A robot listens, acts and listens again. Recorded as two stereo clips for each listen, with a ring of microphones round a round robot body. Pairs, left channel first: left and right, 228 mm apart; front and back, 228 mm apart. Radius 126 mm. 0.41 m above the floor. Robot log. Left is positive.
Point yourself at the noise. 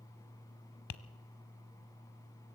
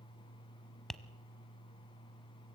note: The tapping: 90° left.
cmd yaw +90
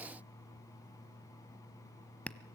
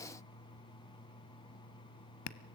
end: Facing the tapping.